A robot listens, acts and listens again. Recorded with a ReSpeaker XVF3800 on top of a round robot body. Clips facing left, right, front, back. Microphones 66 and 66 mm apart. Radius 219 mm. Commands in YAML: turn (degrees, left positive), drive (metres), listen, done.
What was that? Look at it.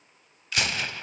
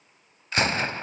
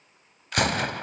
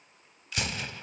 turn: -35
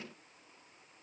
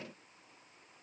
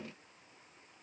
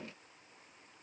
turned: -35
done: "I heard a gunshot from this way, but can't make it out now."